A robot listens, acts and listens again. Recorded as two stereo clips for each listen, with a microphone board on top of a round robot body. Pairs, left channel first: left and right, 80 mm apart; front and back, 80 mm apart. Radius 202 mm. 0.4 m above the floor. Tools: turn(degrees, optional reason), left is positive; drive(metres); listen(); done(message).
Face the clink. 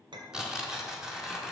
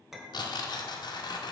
turn(degrees=-95, reason="The clink: 95° right.")
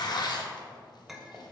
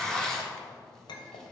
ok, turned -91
done("Facing the clink.")